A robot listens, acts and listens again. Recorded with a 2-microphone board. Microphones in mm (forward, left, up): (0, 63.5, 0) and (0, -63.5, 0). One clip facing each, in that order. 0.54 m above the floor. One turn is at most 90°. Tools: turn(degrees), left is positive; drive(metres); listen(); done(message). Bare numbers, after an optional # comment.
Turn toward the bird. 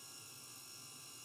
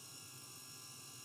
listen()
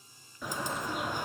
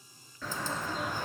# The bird: about 15° left or 165° left.
turn(15)
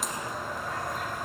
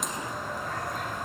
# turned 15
done("Facing the bird, 1 to 2 m away.")